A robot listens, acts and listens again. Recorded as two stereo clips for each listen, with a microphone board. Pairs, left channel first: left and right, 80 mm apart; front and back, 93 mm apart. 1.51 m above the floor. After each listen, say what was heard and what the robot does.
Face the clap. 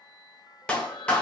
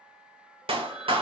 The clap: 165° left. Turn 165° left.
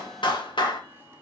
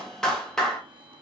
The clap is now 85° left. Turn 85° left.
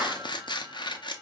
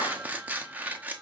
Keep listening.
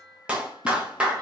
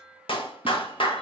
The clap is now 15° right. Turn 15° right.
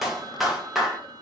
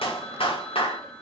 Facing the clap.